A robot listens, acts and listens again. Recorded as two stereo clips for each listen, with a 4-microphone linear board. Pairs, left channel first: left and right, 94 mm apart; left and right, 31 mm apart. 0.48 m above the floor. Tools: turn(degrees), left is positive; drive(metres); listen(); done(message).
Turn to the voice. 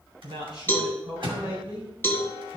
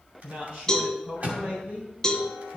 turn(degrees=-65)
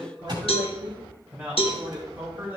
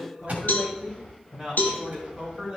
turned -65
turn(degrees=-25)
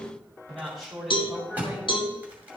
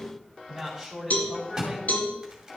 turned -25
done("Found it: a man speaking, straight ahead, 2 to 4 m away.")